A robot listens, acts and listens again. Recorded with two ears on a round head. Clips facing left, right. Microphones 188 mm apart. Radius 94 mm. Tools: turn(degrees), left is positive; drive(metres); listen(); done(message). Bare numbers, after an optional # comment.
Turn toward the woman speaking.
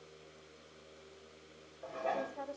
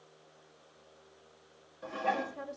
# The woman speaking: about 30° right or 150° right.
turn(-30)
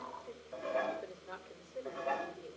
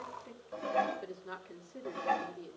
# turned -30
# So it is at 130° right.
turn(-130)
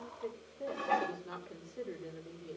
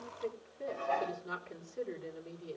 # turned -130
done("Facing the woman speaking.")